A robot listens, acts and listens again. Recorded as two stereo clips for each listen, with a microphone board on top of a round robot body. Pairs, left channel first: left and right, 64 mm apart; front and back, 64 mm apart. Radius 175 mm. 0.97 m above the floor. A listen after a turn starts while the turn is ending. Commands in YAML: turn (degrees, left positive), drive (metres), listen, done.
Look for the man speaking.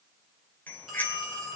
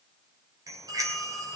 listen: true
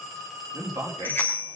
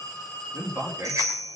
turn: -135
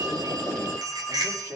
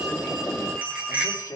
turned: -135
turn: -35
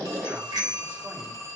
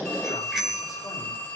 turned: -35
listen: true
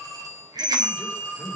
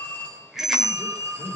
listen: true
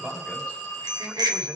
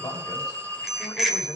turn: -20
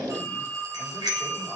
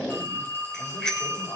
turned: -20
listen: true
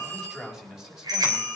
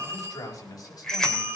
done: "Facing the man speaking, over 4 m away."